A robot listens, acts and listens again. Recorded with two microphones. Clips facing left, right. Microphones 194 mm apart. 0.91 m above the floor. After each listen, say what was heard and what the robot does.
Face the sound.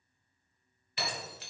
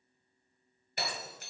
The breaking glass: about 45° right or 135° right. Turn 45° right.
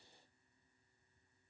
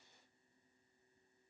Keep listening.
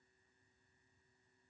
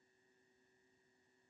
I heard breaking glass, but can't make it out now. It was about straight ahead or 90° right.